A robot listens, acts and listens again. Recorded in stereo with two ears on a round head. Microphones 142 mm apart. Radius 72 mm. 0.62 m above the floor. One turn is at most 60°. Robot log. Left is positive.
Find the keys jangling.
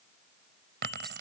cmd yaw -60
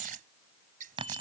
note: So it is at 30° right.
cmd yaw -30
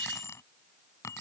note: The keys jangling is now 20° left.
cmd yaw +20
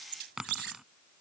end: Facing the keys jangling.